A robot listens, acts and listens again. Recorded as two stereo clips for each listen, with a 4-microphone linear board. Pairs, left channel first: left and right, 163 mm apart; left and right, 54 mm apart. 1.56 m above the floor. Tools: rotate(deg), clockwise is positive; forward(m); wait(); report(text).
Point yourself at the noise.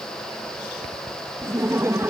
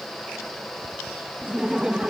rotate(30)
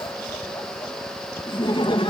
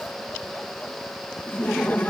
rotate(-30)
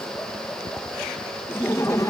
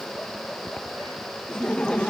rotate(-20)
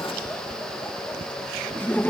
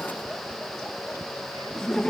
rotate(-10)
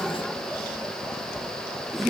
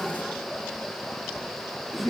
report("Found it: laughter, straight ahead.")